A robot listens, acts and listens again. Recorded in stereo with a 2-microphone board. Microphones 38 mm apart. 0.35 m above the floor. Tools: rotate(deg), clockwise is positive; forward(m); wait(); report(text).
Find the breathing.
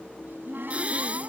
rotate(35)
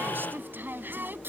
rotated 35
wait()
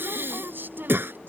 rotate(110)
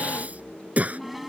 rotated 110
rotate(40)
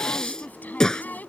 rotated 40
rotate(-20)
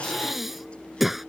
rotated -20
report("Facing the breathing.")